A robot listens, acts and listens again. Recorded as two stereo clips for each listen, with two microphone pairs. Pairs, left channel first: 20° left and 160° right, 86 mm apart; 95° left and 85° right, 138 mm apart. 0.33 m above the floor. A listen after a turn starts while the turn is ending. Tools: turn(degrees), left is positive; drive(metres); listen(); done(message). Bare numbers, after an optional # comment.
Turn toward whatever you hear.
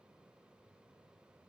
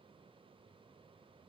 listen()
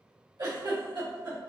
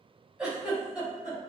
# The giggle: 165° right.
turn(-165)
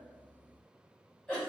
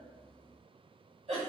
# The giggle is now 60° right.
turn(-60)
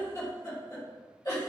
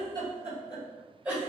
done("Facing the giggle.")